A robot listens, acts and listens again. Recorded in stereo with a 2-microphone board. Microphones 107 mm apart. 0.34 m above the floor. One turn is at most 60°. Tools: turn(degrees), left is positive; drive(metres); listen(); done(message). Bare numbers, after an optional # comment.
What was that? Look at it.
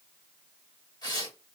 # The tearing paper: about 40° left or 140° left.
turn(40)
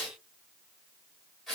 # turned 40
done("Found it: tearing paper, straight ahead.")